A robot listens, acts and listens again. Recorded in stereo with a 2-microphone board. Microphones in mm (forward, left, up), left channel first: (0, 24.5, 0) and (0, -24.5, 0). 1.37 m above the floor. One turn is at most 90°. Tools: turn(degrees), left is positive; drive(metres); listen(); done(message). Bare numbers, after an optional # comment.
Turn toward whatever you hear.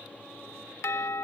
# The doorbell: about 70° left or 110° left.
turn(70)
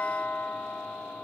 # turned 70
# So it is at 40° left.
turn(40)
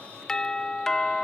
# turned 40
# The doorbell is now 15° left.
turn(15)
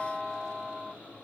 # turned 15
done("Facing the doorbell.")